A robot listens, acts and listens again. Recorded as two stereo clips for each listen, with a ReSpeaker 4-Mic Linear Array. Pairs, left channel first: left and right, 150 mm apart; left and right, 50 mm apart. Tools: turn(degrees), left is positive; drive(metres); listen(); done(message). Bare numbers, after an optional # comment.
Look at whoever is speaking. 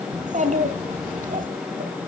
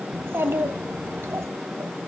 # The child speaking: about 60° right or 120° right.
turn(-60)
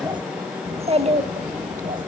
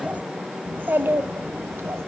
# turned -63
# So it is at 55° right.
turn(-55)
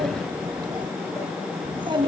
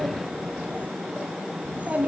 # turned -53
# The child speaking is now 30° right.
turn(-30)
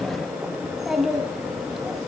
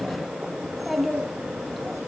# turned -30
done("Found it: a child speaking, straight ahead, 2 to 4 m away.")